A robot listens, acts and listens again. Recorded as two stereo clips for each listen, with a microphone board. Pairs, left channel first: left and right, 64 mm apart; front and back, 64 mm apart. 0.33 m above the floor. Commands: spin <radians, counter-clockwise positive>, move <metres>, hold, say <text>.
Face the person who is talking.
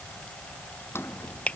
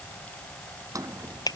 hold
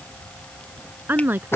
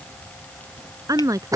spin -2.62
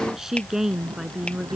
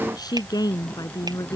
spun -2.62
say Facing the woman speaking.